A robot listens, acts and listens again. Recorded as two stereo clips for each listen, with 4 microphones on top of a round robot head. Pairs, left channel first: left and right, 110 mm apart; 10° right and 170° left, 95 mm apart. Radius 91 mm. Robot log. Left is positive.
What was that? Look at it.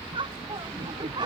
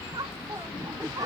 note: The laughter: 135° right.
cmd yaw -135
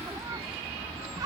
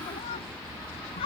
note: The laughter is now 30° right.
cmd yaw -30
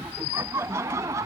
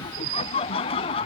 note: The laughter is now 25° right.
cmd yaw -25
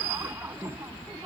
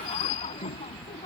note: The laughter is now 20° right.
cmd yaw -20
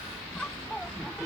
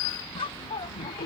end: Found it: laughter, straight ahead.